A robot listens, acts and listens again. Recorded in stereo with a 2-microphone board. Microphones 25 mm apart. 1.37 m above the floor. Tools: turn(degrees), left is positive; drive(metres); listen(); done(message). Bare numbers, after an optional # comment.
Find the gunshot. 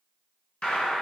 # The gunshot: about 50° left or 130° left.
turn(50)
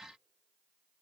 listen()
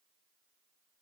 done("I heard a gunshot, but can't make it out now. It was about straight ahead or 80° left.")